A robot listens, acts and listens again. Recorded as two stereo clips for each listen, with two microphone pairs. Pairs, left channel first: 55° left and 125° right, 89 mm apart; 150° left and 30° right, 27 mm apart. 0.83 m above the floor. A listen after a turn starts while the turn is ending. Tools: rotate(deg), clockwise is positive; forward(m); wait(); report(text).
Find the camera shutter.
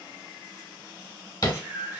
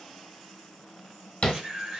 rotate(40)
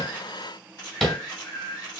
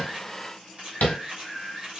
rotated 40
report("Found it: a camera shutter, straight ahead, 1 to 2 m away.")